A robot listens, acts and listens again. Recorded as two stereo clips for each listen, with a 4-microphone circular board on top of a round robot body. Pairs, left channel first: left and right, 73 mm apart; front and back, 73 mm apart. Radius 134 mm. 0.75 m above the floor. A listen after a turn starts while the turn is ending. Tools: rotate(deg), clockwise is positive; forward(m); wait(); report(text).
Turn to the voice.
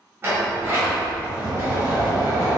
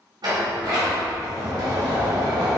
wait()
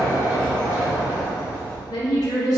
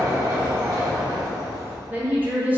rotate(-115)
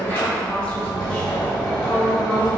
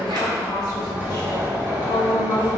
rotate(-15)
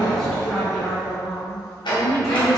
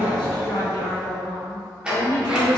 report("Found it: a woman speaking, straight ahead, 1 to 2 m away.")